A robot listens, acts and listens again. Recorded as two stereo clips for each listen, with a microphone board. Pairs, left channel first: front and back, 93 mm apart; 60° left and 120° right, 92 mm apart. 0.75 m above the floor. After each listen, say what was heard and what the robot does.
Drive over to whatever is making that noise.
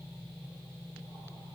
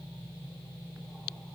Keep listening.
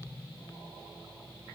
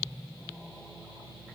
Keep listening.
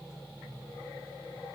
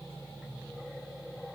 I can't make out anything to turn to.